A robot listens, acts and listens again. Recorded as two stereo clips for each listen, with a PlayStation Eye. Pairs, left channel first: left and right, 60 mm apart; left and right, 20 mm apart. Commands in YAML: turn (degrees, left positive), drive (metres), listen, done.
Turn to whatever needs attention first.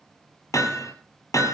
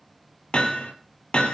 listen: true
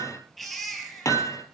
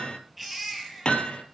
turn: 30
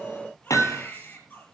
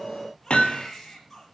turn: 150
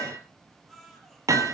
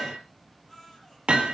done: "Facing the baby crying."